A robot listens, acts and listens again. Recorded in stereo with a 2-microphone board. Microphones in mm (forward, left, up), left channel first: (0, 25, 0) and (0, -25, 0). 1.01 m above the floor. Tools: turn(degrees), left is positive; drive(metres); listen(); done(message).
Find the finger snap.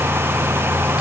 listen()
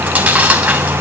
listen()
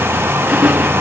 done("I can't make out a finger snap, only chewing.")